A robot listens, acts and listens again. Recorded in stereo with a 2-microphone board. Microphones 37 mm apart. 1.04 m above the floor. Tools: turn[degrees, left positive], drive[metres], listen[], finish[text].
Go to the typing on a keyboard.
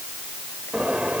Action: listen[]
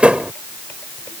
Action: listen[]
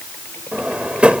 Action: finish[I can't make out typing on a keyboard to turn to.]